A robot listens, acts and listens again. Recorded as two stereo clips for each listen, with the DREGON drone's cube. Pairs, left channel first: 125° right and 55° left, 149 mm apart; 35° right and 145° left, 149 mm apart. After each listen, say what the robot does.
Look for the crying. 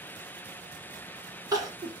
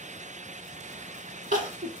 Turn 120° left.
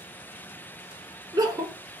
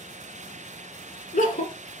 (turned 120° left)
Turn 10° right.
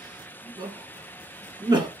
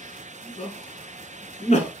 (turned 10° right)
Facing the crying.